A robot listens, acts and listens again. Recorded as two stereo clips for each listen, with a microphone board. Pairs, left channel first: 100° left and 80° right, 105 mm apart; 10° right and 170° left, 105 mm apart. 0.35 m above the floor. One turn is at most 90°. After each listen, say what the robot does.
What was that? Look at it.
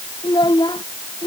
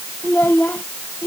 Turn 60° left.
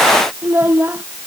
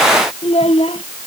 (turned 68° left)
Turn 10° right.
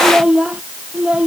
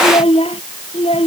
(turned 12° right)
Facing the child speaking.